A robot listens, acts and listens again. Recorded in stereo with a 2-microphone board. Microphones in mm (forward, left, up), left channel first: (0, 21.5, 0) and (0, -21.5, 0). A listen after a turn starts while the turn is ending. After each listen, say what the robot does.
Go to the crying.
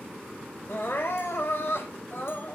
Turn 65° left.
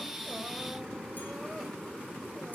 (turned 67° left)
Keep listening.
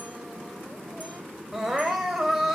Drive 1.0 m forward.
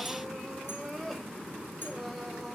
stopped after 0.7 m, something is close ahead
Blocked. The crying is further on, straight ahead.